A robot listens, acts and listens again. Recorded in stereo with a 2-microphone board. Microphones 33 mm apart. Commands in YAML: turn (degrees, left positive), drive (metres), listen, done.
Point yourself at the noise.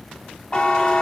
turn: 25
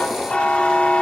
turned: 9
turn: 30
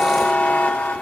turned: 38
turn: 105
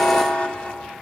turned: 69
turn: 35
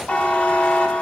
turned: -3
turn: 40
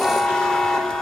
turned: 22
turn: 15
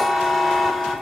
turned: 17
done: "Found it: a buzzer, straight ahead, under 1 m away."